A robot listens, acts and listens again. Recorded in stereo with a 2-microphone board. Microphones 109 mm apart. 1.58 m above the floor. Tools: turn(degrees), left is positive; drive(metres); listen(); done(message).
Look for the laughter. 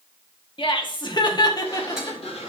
turn(degrees=35)
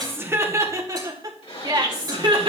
turn(degrees=-50)
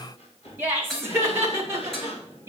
turn(degrees=-20)
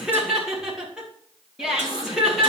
done("Facing the laughter, 2 to 4 m away.")